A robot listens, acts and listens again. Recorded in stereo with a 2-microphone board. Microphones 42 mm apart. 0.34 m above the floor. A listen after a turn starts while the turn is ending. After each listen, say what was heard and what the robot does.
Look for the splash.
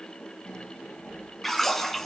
Turn 30° left.
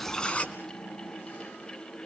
So it is at 145° left. Turn 145° left.
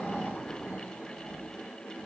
I heard a splash from this way, but can't make it out now.